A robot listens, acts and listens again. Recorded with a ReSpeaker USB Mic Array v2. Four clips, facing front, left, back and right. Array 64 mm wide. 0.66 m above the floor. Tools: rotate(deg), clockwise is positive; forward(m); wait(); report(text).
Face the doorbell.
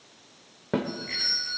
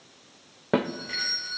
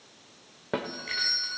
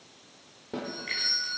rotate(170)
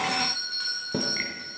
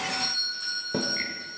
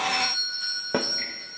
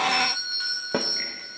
rotate(50)
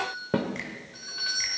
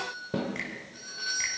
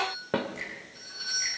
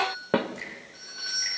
rotate(10)
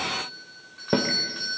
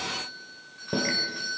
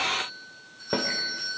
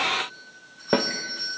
report("Found it: a doorbell, straight ahead, over 4 m away.")